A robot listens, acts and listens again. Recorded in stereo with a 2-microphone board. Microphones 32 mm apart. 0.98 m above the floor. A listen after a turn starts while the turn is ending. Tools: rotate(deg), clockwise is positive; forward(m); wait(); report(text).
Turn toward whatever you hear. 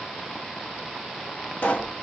rotate(-60)
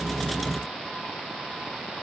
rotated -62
wait()
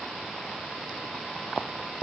report("I heard a pop, but can't make it out now. It was about straight ahead or 55° left.")